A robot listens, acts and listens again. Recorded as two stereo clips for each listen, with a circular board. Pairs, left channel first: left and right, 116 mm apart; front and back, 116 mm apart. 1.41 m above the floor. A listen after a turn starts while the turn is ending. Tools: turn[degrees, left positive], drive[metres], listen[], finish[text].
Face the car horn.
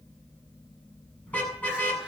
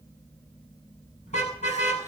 Thought: The car horn: 15° left.
Action: turn[15]
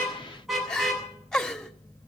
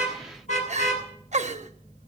Action: finish[Facing the car horn.]